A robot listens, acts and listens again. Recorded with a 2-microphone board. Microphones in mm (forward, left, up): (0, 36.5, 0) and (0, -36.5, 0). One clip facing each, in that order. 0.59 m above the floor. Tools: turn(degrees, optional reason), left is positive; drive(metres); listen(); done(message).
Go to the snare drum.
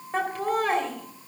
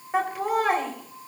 listen()
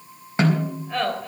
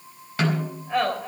turn(degrees=25, reason="The snare drum: about 25° left or 155° left.")
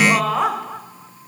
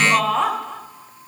listen()
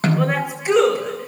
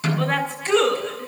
turn(degrees=130, reason="So it is at 130° left.")
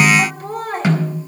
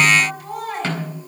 turn(degrees=15, reason="The snare drum is now 15° left.")
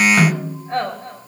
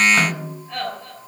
drive(metres=1.0)
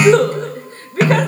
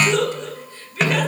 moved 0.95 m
drive(metres=1.0)
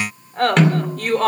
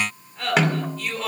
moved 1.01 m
drive(metres=1.0)
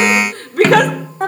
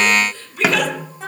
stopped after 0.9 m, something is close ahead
turn(degrees=-10, reason="The snare drum is now 10° right.")
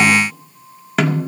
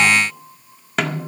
done("Arrived at the snare drum, straight ahead.")